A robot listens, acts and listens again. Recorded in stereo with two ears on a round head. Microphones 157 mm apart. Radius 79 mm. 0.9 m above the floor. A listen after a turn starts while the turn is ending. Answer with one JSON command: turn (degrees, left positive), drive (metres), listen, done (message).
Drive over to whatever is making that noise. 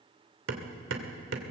{"turn": -90}
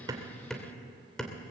{"drive": 1.0}
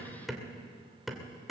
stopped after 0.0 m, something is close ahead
{"done": "Something is in my way. I am facing the hammering but have not reached it."}